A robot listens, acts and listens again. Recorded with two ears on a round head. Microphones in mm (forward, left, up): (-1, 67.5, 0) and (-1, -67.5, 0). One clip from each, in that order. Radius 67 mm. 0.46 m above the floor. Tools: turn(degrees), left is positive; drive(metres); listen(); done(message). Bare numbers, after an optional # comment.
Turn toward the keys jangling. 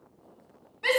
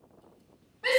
listen()
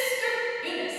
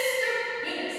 listen()
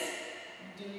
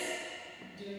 done("I can't make out keys jangling, only a shout.")